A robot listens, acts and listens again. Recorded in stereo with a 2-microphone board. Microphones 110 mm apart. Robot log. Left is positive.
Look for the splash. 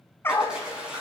cmd yaw -30
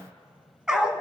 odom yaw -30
cmd idle
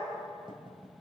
end: I heard a splash, but can't make it out now. It was about 20° left or 140° right.